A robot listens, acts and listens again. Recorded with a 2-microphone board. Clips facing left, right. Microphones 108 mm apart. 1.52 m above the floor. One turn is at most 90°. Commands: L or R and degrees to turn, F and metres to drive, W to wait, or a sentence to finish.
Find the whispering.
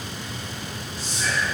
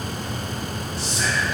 R75
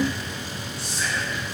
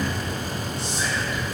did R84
R20
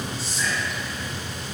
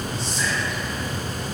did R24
Found it: whispering, straight ahead, under 1 m away.